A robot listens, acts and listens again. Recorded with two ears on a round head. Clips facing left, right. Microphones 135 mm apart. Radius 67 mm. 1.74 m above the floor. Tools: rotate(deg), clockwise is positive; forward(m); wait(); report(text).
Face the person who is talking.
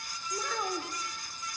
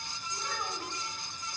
rotate(-70)
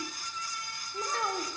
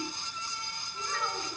rotate(-30)
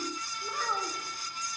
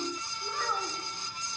report("Facing the child speaking, 2 to 4 m away.")